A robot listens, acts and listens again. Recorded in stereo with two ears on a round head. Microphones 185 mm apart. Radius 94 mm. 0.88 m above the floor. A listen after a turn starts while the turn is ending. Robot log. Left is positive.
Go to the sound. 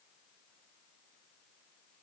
cmd idle
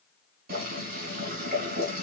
note: The boiling: about 45° right or 135° right.
cmd yaw -45
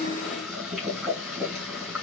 cmd fwd 1.0
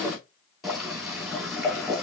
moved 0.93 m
cmd fwd 1.0
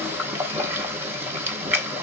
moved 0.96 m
note: The boiling is now 10° right.
cmd yaw -10
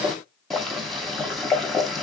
cmd fwd 1.0
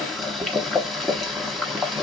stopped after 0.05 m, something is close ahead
end: Arrived at the boiling, straight ahead.